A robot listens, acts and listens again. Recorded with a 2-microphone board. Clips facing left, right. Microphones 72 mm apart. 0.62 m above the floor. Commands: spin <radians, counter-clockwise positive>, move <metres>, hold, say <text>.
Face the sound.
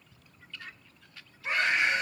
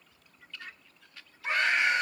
spin -0.87
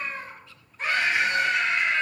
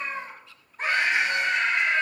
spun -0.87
spin -1.13
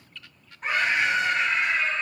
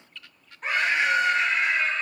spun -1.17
say Facing the scream.